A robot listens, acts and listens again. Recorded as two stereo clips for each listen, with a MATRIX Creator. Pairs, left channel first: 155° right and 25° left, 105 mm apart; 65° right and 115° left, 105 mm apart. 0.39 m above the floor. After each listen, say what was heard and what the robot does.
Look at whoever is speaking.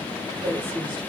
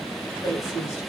The woman speaking: 15° right. Turn 15° right.
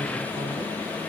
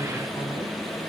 Keep listening.
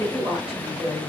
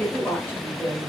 Facing the woman speaking, 1 to 2 m away.